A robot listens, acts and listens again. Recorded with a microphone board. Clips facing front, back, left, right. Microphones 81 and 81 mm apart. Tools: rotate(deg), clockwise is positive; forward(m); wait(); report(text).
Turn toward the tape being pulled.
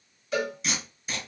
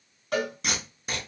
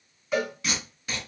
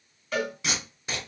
rotate(155)
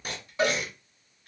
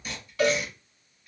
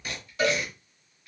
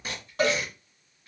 rotate(30)
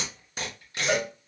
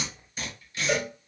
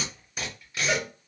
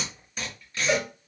rotate(-10)
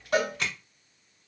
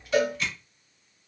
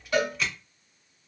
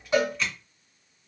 report("Facing the tape being pulled, 1 to 2 m away.")